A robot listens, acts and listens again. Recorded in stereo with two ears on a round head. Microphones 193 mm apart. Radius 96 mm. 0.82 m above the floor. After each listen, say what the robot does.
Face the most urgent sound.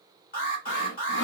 Turn 40° left.
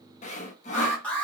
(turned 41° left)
Facing the alarm.